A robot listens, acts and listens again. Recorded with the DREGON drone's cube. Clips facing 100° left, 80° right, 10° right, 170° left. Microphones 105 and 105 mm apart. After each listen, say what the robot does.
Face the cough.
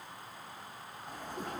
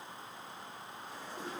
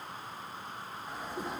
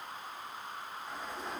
Keep listening.
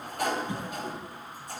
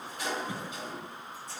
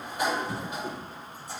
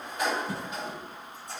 Turn 155° right.
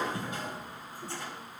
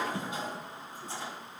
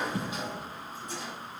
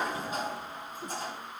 Turn 15° right.
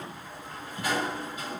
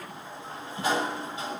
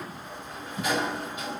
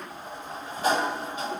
Turn 10° right.
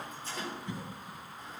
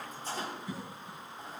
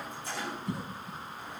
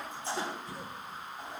Facing the cough, over 4 m away.